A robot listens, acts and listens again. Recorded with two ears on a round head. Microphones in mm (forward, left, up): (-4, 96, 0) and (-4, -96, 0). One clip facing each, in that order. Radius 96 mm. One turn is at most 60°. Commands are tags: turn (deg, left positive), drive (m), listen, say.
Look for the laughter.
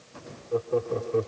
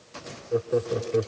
<turn deg="-30"/>
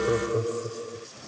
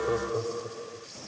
<turn deg="35"/>
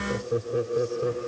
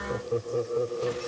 <turn deg="25"/>
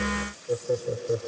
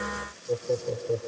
<turn deg="10"/>
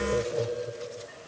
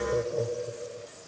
<say>Facing the laughter.</say>